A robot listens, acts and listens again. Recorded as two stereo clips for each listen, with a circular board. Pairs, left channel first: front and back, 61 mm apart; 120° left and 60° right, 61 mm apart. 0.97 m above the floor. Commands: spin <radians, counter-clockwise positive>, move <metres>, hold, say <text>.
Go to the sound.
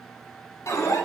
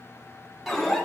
spin 0.44
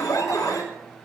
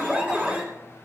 move 1.0
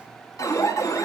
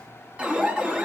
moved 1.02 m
spin 0.17
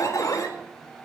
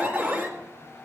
move 1.0
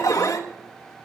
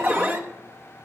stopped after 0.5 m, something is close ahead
say Arrived at the alarm, straight ahead.